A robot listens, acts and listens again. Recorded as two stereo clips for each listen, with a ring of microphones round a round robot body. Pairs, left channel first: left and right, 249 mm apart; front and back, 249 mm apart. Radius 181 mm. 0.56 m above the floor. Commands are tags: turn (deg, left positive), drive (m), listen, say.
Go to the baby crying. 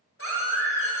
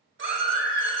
<turn deg="-135"/>
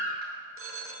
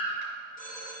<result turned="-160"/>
<turn deg="25"/>
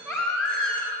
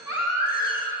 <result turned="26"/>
<drive m="1.0"/>
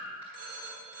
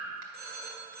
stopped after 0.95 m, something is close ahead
<listen/>
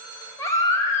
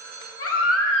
<turn deg="10"/>
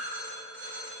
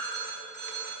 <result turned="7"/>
<listen/>
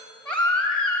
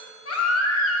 <say>I am next to the baby crying.</say>